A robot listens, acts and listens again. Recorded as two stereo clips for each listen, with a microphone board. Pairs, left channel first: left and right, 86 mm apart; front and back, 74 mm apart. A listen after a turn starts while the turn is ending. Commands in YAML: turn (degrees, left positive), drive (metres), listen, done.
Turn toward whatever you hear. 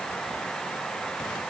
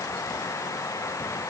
listen: true
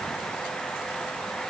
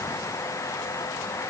listen: true
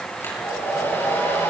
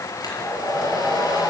turn: 30
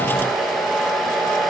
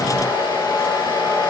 done: "Facing the hair dryer."